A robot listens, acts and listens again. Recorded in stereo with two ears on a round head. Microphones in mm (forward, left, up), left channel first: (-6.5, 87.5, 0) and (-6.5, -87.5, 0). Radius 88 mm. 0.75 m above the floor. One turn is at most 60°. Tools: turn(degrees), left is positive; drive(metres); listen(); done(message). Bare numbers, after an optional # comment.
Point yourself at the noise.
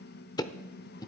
# The ticking: about 20° left or 160° left.
turn(20)
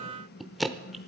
done("Facing the ticking.")